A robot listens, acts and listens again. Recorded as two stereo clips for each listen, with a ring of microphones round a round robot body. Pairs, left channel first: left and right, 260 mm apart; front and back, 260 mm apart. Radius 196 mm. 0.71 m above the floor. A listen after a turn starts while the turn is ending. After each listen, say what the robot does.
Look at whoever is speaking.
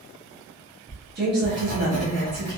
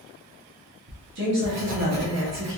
Turn 140° right.
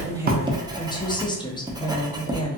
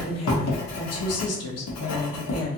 Turn 15° left.
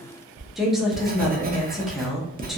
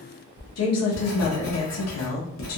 Facing the woman speaking.